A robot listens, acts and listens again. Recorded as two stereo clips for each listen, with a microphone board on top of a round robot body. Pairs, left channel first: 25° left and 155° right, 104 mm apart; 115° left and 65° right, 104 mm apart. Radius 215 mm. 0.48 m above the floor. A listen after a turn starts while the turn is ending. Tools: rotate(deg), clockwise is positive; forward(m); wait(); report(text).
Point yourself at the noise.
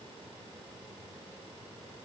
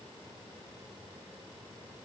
wait()
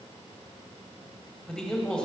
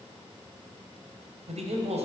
rotate(60)
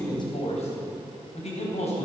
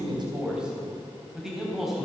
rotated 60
rotate(-20)
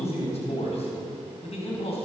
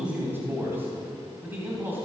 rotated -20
report("Found it: a man speaking, straight ahead.")